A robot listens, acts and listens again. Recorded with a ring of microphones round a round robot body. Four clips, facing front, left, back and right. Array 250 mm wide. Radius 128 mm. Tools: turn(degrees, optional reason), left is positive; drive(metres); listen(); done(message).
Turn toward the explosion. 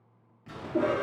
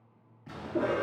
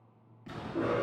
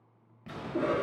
turn(degrees=-100, reason="The explosion: 100° right.")
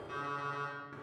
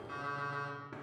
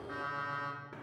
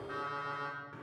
done("Facing where the explosion came from. I can't hear it now.")